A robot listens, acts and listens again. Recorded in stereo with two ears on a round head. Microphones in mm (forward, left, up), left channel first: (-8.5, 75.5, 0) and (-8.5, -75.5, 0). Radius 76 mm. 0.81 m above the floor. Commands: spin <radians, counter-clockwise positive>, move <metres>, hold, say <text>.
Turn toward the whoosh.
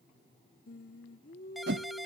spin -1.57
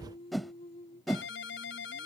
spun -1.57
say Found it: a whoosh, straight ahead.